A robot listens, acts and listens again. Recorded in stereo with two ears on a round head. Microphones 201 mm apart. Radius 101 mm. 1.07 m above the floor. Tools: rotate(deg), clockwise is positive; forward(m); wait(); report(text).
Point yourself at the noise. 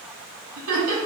rotate(70)
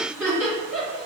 report("Facing the laughter.")